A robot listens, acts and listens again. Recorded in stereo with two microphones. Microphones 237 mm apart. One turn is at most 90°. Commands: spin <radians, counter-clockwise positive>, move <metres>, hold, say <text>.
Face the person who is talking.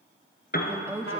spin -0.52
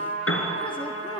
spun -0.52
hold
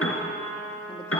hold
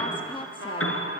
spin 0.35
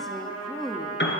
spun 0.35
say Found it: a woman speaking, straight ahead, 1 to 2 m away.